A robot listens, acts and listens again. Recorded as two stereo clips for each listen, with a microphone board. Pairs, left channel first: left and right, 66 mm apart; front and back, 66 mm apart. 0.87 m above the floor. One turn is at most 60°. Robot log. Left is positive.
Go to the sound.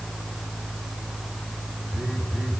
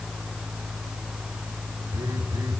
note: The phone buzzing: 165° right.
cmd yaw -60
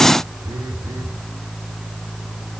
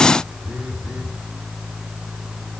note: The phone buzzing is now 105° right.
cmd yaw -60
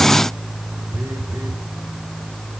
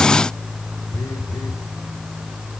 note: The phone buzzing is now 35° right.
cmd yaw -35
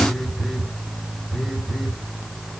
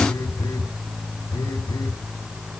cmd fwd 1.0
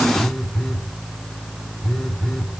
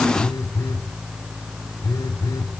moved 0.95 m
cmd fwd 1.0
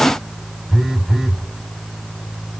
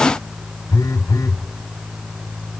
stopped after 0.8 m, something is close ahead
end: I am next to the phone buzzing.